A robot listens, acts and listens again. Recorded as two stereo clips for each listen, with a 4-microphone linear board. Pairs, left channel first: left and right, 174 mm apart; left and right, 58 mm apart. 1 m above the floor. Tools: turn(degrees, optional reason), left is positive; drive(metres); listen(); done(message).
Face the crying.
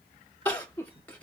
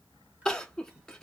turn(degrees=30)
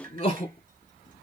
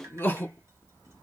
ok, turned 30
turn(degrees=140, reason="So it is at 140° left.")
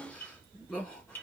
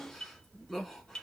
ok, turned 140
done("Facing the crying, 1 to 2 m away.")